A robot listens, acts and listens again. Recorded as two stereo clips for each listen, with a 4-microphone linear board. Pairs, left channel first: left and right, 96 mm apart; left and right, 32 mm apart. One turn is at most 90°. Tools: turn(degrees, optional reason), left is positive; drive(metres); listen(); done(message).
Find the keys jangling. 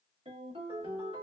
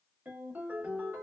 listen()
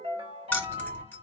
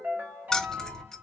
turn(degrees=20, reason="The keys jangling: about 20° left or 160° left.")
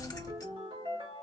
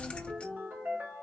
turn(degrees=90, reason="So it is at 140° left.")
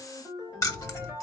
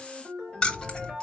turn(degrees=35, reason="The keys jangling is now 35° left.")
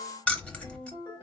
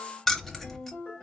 turn(degrees=15, reason="The keys jangling is now 15° left.")
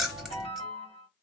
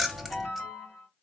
done("Facing the keys jangling, under 1 m away.")